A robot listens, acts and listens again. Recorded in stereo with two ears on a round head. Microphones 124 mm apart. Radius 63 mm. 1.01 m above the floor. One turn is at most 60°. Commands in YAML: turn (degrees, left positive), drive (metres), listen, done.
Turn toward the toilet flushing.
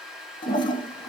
turn: 35
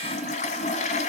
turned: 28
turn: 60
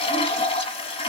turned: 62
turn: 50
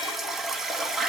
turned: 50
done: "Found it: a toilet flushing, straight ahead, 1 to 2 m away."